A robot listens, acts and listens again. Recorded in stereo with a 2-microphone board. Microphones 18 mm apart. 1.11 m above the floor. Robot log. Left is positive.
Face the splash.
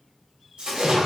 cmd yaw -90
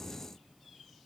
end: Facing where the splash came from. I can't hear it now.